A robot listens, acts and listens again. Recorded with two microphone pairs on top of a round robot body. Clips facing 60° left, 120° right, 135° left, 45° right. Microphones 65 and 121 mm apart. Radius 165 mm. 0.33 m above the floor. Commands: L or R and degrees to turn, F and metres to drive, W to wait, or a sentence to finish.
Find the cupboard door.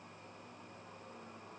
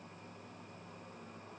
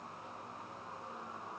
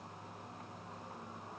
W
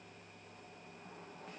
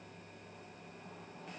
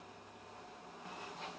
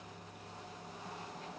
W
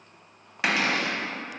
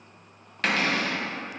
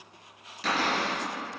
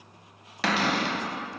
R20
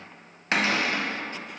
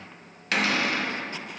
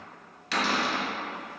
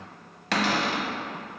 Facing the cupboard door, under 1 m away.